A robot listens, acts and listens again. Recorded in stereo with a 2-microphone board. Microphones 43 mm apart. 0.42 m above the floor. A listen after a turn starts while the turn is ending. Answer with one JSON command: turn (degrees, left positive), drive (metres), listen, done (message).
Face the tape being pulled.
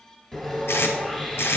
{"turn": 90}
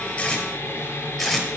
{"done": "Found it: tape being pulled, straight ahead, 1 to 2 m away."}